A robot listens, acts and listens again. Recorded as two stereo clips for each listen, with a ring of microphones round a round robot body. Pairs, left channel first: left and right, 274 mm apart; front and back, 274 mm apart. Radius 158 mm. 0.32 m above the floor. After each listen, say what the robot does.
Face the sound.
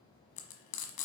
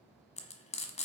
Turn 65° left.
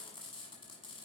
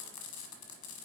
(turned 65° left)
Turn 15° left.
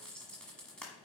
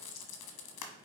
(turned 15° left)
Facing the frying, 1 to 2 m away.